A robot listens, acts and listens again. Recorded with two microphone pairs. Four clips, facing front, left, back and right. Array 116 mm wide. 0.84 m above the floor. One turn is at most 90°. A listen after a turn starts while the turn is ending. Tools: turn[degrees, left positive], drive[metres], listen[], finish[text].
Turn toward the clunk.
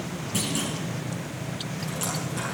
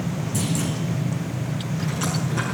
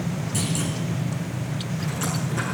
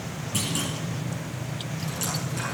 Thought: The clunk: 55° right.
Action: turn[-55]
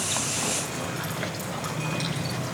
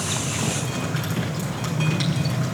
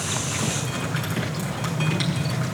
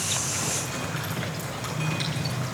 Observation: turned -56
Action: finish[Facing where the clunk came from. I can't hear it now.]